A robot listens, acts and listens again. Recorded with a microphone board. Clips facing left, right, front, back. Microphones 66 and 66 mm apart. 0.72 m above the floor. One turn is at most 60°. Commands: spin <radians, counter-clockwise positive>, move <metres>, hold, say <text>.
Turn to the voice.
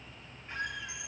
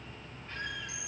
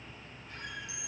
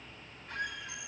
hold
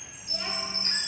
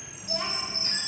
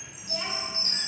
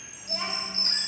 spin -1.05
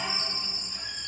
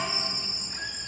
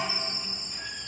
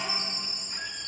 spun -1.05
spin -1.05
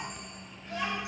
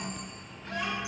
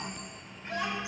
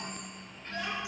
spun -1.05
say Found it: a child speaking, straight ahead.